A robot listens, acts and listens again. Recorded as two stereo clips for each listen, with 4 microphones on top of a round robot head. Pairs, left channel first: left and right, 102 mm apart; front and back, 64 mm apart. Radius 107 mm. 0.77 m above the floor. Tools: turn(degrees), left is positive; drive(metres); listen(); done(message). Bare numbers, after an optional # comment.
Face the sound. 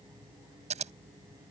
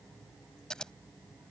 # The scissors: 85° right.
turn(-85)
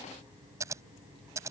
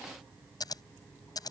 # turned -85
# The scissors is now 25° right.
turn(-25)
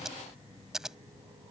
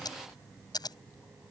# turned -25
done("Facing the scissors.")